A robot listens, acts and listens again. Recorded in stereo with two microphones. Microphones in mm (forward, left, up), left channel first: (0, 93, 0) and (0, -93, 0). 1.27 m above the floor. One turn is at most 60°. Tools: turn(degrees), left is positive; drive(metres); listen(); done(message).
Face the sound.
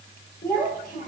turn(degrees=50)
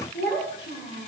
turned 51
turn(degrees=60)
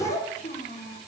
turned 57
turn(degrees=45)
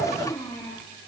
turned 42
turn(degrees=20)
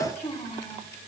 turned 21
turn(degrees=20)
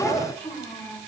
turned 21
done("Facing the child speaking, 2 to 4 m away.")